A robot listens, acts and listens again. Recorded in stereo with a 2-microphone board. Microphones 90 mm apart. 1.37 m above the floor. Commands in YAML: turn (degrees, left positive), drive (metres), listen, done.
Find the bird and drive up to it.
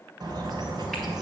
turn: -50
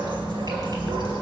turn: -75
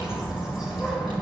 drive: 1.0
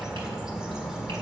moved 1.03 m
drive: 1.0
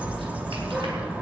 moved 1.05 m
turn: -20
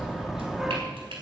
drive: 1.0
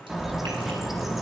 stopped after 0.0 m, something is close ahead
done: "Arrived at the bird, straight ahead."